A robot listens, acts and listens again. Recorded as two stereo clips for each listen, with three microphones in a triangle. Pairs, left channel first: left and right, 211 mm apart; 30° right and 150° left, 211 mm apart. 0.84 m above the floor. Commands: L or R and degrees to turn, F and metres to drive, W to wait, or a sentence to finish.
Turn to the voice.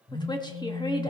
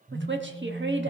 L155
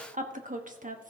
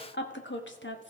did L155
R45
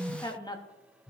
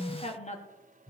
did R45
L20
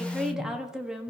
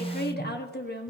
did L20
Found it: a woman speaking, straight ahead, 1 to 2 m away.